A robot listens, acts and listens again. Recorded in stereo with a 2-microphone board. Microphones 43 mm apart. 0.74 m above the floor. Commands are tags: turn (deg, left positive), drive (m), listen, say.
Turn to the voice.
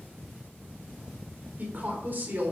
<turn deg="-55"/>
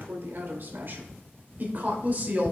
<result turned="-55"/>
<turn deg="-40"/>
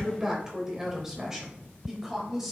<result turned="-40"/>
<turn deg="-10"/>
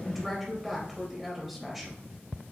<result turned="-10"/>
<say>Facing the woman speaking, 2 to 4 m away.</say>